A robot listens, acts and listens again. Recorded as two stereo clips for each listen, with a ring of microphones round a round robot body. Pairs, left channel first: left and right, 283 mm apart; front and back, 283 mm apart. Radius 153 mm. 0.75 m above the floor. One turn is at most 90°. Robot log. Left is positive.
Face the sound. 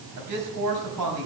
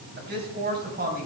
note: The man speaking: 120° right.
cmd yaw -90
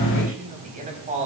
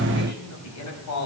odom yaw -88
note: The man speaking is now 25° right.
cmd yaw -25
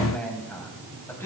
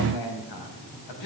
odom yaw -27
note: The man speaking is now 10° left.
cmd yaw +10
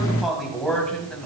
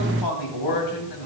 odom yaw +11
end: Found it: a man speaking, straight ahead.